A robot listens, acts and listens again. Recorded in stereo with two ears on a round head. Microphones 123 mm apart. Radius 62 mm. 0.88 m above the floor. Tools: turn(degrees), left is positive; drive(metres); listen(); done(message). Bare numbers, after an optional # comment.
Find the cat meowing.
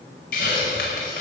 listen()
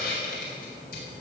listen()
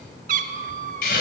# The cat meowing: about 65° right or 115° right.
turn(-65)
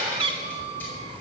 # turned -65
# So it is at 40° right.
turn(-40)
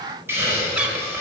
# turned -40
listen()
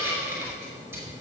listen()
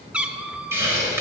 # The cat meowing is now 10° right.
turn(-10)
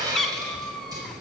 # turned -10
done("Facing the cat meowing, under 1 m away.")